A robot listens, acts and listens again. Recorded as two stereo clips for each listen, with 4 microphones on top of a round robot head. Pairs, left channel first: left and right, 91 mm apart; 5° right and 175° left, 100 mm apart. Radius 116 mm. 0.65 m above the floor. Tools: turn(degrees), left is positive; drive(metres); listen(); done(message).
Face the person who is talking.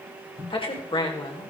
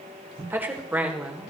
turn(degrees=100)
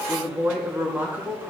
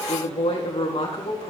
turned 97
turn(degrees=-20)
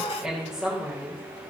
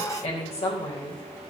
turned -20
turn(degrees=-10)
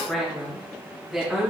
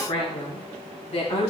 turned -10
done("Found it: a woman speaking, straight ahead, 2 to 4 m away.")